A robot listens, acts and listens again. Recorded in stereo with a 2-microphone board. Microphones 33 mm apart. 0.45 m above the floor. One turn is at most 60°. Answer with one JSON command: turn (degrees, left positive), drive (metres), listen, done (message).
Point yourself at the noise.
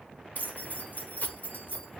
{"turn": 55}
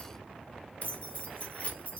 {"turn": 55}
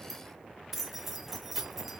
{"turn": -10}
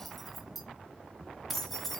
{"done": "Found it: keys jangling, straight ahead, under 1 m away."}